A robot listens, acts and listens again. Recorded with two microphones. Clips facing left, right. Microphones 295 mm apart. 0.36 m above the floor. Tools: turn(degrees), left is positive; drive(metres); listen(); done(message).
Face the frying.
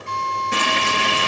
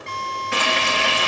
turn(degrees=40)
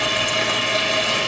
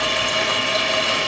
done("Found it: frying, straight ahead, over 4 m away.")